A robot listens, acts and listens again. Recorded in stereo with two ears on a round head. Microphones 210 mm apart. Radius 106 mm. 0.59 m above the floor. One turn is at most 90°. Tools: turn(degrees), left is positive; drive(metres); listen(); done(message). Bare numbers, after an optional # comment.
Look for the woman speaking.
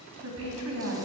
# The woman speaking: about 70° right or 110° right.
turn(-70)
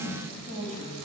# So it is at 35° right.
turn(-35)
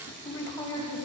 # The woman speaking is now 15° left.
turn(15)
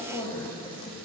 # The woman speaking is now 10° left.
turn(10)
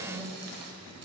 done("Facing the woman speaking, 2 to 4 m away.")